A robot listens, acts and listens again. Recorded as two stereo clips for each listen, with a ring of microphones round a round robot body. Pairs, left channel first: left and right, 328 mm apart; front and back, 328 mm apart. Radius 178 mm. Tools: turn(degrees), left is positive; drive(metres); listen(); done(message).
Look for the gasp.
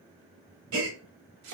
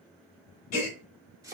turn(degrees=-40)
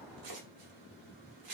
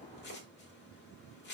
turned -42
done("Facing where the gasp came from. I can't hear it now.")